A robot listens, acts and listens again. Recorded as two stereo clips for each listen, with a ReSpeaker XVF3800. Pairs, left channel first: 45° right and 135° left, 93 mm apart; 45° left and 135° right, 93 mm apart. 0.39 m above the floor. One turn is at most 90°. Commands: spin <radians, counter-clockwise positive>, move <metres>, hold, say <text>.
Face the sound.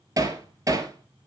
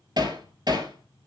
spin -1.57
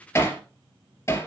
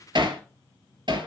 spin -1.57
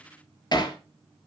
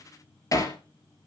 say Found it: hammering, straight ahead, 2 to 4 m away.